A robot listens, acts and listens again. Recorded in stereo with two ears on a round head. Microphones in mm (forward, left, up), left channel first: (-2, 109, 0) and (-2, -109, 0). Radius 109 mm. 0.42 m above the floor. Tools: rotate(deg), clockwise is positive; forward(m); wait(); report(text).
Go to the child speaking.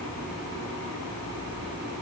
wait()
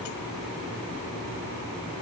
wait()
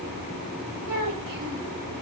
rotate(90)
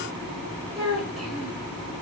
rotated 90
forward(1.0)
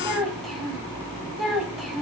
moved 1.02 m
forward(1.0)
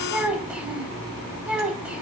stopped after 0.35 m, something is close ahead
report("I am next to the child speaking.")